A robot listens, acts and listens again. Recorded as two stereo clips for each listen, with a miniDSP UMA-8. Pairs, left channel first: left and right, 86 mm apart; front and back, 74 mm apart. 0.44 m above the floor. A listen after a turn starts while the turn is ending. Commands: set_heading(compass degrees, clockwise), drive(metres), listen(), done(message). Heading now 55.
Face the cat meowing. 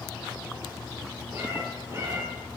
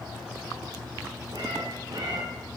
set_heading(200)
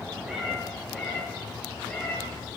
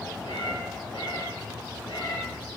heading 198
set_heading(188)
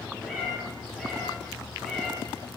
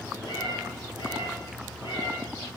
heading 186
done("Facing the cat meowing, over 4 m away.")